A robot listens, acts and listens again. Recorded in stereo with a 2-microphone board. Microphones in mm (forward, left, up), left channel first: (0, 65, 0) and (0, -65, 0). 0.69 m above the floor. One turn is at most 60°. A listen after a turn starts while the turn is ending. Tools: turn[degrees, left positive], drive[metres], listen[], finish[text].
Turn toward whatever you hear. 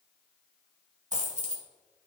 Thought: The dropped coin: about 70° right or 110° right.
Action: turn[-60]
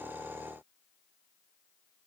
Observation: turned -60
Action: listen[]
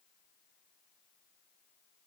Action: finish[I heard a dropped coin, but can't make it out now. It was about 10° right or 50° right.]